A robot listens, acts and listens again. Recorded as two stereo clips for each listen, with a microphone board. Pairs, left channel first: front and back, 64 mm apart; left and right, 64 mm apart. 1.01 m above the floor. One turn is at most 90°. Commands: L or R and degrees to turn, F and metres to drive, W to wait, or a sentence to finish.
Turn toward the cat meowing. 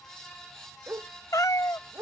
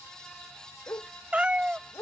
R20
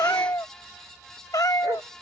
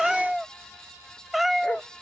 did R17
Found it: a cat meowing, straight ahead.